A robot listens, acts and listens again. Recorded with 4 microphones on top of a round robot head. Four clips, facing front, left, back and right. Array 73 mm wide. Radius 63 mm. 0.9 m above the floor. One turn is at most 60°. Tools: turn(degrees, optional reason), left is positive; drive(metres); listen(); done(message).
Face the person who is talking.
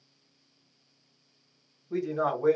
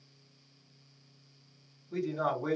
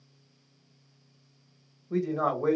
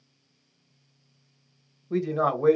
turn(degrees=-60, reason="The man speaking: 90° right.")
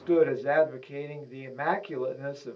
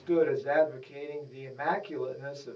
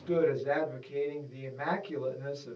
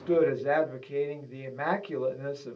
turn(degrees=-30, reason="The man speaking is now 30° right.")
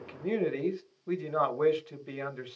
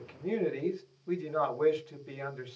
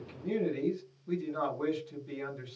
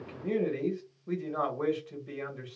done("Found it: a man speaking, straight ahead, 1 to 2 m away.")